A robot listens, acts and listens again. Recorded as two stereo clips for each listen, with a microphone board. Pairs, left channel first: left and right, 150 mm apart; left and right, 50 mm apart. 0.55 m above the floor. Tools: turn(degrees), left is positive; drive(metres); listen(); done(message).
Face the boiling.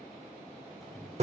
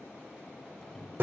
turn(degrees=30)
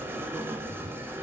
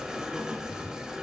listen()
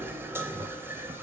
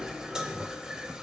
turn(degrees=-35)
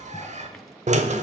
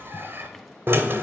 done("Facing the boiling.")